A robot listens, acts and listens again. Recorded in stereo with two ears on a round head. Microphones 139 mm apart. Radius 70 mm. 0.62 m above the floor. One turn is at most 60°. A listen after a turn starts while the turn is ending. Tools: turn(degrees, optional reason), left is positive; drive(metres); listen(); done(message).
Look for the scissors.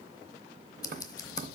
turn(degrees=25, reason="The scissors: about 25° left or 155° left.")
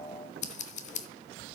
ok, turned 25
turn(degrees=60, reason="So it is at 135° left.")
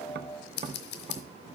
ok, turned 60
turn(degrees=60, reason="The scissors is now 75° left.")
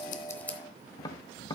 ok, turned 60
turn(degrees=10, reason="The scissors is now 10° left.")
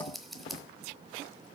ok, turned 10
done("Facing the scissors, under 1 m away.")